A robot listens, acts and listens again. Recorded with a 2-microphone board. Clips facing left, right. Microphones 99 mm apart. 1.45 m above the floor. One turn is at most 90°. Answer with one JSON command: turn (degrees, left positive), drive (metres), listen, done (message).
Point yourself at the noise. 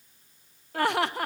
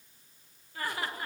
{"turn": 65}
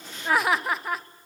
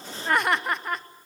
{"done": "Found it: laughter, straight ahead."}